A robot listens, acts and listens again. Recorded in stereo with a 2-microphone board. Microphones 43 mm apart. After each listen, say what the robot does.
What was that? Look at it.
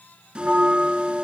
Turn 25° right.
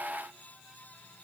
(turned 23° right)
Keep listening.
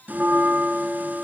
Turn 130° right.
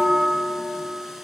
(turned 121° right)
Turn 10° right.
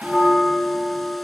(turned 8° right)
Found it: a bell, straight ahead, 1 to 2 m away.